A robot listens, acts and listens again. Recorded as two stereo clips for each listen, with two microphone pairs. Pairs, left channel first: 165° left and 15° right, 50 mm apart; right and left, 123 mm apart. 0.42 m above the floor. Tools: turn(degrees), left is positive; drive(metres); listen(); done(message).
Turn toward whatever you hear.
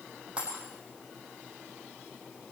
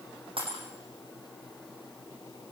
turn(degrees=50)
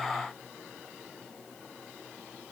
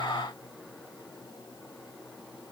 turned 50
done("Facing where the breaking glass came from. I can't hear it now.")